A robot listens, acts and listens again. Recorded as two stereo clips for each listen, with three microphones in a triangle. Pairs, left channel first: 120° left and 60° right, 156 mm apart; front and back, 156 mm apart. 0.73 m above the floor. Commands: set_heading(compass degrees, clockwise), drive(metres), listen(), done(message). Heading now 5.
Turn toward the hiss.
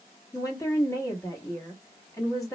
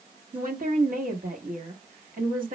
listen()
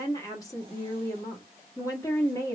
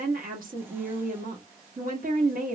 listen()
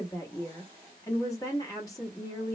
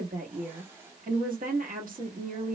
done("I can't make out a hiss to turn to.")